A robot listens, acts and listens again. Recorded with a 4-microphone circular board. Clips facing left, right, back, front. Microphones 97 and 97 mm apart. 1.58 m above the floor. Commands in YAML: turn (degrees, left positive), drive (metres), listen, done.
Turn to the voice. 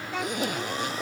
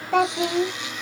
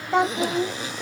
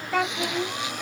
turn: -110
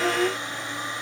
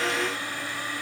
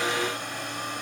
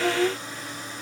turn: 35
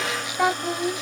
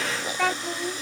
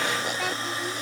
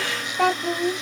turn: 25
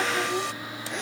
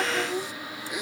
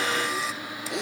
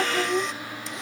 done: "Facing the child speaking."